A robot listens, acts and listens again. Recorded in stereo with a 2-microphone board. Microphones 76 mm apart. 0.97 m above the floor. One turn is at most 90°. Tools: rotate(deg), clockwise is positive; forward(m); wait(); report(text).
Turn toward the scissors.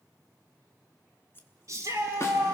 rotate(-30)
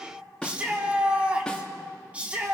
wait()
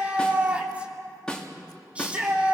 wait()
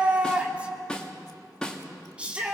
report("I heard scissors, but can't make it out now. It was about straight ahead or 120° left.")